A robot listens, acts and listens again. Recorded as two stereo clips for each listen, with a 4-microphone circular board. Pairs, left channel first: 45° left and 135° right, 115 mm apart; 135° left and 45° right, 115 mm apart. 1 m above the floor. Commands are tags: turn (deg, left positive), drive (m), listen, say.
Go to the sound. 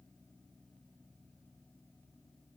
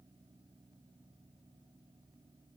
<listen/>
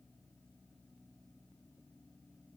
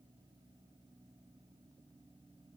<listen/>
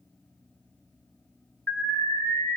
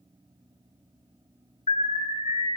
<turn deg="115"/>
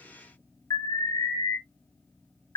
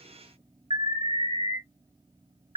<turn deg="-15"/>
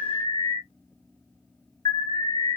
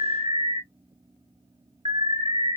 <drive m="1.0"/>
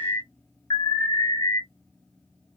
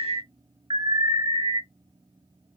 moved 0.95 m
<turn deg="-10"/>
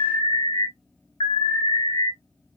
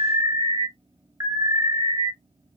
<drive m="1.0"/>
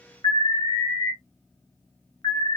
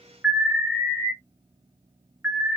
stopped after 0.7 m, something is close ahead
<turn deg="10"/>
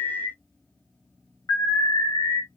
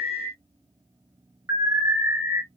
<say>Arrived at the alarm, straight ahead.</say>